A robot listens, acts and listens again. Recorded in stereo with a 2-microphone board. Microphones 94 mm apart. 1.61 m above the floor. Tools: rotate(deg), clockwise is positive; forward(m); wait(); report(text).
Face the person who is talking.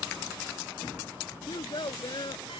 rotate(-60)
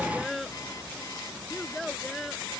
report("Facing the child speaking.")